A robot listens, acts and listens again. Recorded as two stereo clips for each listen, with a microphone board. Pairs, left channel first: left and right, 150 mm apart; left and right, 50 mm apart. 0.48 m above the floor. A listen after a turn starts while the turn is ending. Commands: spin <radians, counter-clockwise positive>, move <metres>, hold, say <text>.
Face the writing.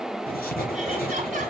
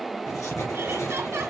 spin 1.57
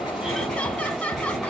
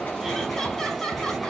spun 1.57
say Found it: writing, straight ahead, 2 to 4 m away.